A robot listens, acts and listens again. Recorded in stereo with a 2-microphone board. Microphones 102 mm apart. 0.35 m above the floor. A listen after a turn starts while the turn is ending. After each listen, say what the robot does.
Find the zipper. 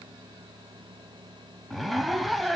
Turn 30° left.
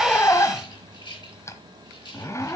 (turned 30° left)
Turn 150° left.
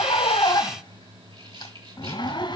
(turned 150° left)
Turn 55° left.
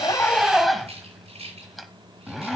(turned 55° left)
Found it: a zipper, straight ahead, 1 to 2 m away.